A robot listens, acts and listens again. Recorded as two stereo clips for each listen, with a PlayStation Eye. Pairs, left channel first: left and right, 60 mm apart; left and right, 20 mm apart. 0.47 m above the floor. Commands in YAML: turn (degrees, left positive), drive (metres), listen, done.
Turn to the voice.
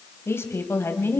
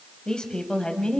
turn: 45
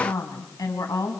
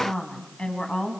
turn: 105
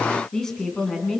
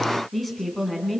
turn: 10
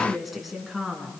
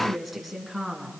done: "Facing the woman speaking, over 4 m away."